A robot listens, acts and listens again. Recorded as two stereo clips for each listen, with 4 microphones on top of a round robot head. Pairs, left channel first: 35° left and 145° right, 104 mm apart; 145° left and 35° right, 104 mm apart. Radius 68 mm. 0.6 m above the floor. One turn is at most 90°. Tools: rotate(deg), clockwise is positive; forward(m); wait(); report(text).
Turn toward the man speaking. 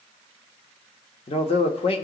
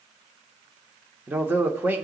rotate(-35)
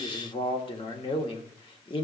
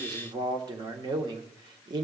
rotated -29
report("Facing the man speaking, 1 to 2 m away.")